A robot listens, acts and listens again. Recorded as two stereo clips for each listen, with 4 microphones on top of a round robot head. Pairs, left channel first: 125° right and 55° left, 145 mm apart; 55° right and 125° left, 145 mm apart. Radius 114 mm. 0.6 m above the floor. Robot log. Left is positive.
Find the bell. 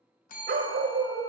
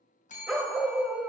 note: The bell: 95° right.
cmd yaw -95
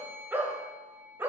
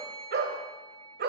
end: Facing the bell.